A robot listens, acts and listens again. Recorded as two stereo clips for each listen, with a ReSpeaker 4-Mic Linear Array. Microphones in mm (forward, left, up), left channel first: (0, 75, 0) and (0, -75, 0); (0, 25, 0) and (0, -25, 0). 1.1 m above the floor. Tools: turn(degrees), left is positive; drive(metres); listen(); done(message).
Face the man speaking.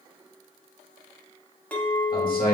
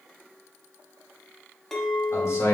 turn(degrees=90)
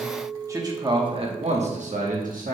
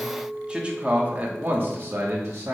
turn(degrees=-70)
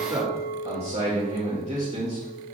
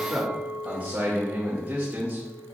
turn(degrees=-45)
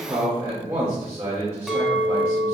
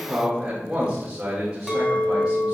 turn(degrees=-20)
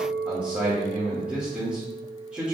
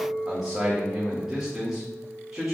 turn(degrees=-10)
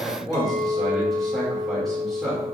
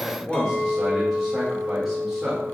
done("Facing the man speaking, 1 to 2 m away.")